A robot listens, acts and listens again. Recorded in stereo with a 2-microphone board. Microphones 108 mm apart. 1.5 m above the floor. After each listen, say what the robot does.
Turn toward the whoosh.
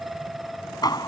Keep listening.
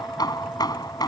Keep listening.
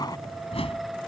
Turn 60° left.
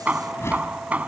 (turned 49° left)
Turn 25° left.
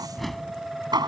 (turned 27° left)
Found it: a whoosh, straight ahead.